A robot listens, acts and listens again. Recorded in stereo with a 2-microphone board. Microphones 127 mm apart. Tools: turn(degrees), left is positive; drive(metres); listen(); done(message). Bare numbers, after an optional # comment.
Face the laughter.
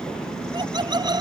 # The laughter: about 35° right or 145° right.
turn(-35)
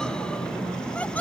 # So it is at 10° left.
turn(10)
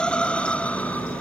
# The laughter is now 10° left.
turn(10)
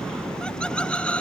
# The laughter is now 10° left.
turn(10)
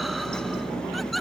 done("Found it: laughter, straight ahead.")